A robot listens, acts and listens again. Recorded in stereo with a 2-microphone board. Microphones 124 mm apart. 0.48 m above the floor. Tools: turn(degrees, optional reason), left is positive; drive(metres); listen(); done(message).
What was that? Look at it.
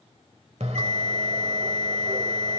turn(degrees=-65, reason="The bell: about 65° right or 115° right.")
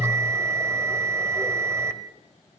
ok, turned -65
turn(degrees=-25, reason="So it is at 25° right.")
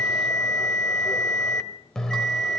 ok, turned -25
done("Facing the bell, 1 to 2 m away.")